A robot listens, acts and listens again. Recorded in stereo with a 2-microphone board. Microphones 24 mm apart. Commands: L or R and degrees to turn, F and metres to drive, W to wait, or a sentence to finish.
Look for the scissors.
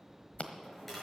L70
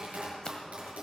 W
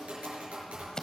L35
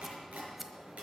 Found it: scissors, straight ahead.